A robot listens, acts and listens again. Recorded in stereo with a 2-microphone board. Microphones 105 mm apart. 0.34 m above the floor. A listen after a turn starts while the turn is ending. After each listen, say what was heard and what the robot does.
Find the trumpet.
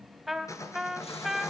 Turn 30° left.
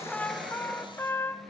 So it is at 155° left. Turn 155° left.
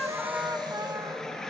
Keep listening.
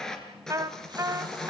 The trumpet is now 35° right. Turn 35° right.
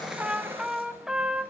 Found it: a trumpet, straight ahead, 1 to 2 m away.